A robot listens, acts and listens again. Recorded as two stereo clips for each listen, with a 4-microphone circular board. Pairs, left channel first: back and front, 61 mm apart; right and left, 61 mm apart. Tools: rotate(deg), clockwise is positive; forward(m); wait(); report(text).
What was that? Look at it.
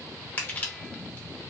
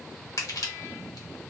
rotate(115)
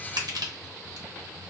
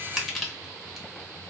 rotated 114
report("Found it: crushing, straight ahead, under 1 m away.")